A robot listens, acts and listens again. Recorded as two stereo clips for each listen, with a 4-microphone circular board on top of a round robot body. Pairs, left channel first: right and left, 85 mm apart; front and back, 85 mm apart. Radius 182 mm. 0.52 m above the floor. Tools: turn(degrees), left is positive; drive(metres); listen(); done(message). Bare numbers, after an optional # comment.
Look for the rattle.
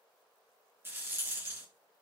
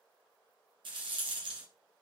# The rattle: 155° left.
turn(155)
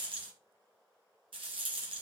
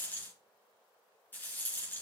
# The rattle is now 70° left.
turn(70)
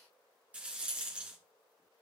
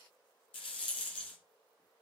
# The rattle is now 15° left.
turn(15)
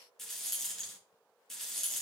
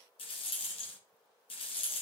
done("Facing the rattle.")